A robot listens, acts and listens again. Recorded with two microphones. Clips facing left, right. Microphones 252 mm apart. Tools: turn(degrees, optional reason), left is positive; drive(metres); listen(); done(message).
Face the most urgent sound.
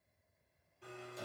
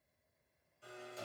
listen()
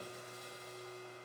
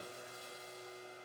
listen()
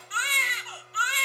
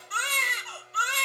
turn(degrees=-50, reason="The baby crying: about 50° right or 130° right.")
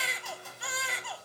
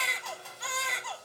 done("Facing the baby crying.")